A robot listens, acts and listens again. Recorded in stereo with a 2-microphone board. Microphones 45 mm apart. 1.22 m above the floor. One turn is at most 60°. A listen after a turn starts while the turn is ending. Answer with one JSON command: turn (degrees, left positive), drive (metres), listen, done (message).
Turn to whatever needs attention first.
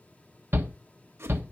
{"turn": -55}
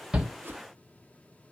{"listen": true}
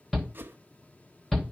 {"done": "Found it: a shout, straight ahead."}